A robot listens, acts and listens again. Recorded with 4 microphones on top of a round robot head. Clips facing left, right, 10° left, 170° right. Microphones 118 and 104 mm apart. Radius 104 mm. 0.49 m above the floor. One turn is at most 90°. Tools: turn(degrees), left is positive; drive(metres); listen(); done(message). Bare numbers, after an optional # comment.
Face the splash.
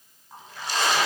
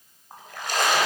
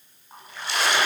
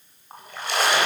# The splash: 130° right.
turn(-90)
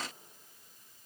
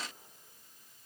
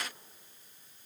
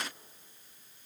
# Nothing new. It was at 40° right.
turn(-40)
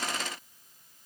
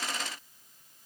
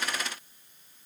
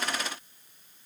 done("Facing where the splash came from. I can't hear it now.")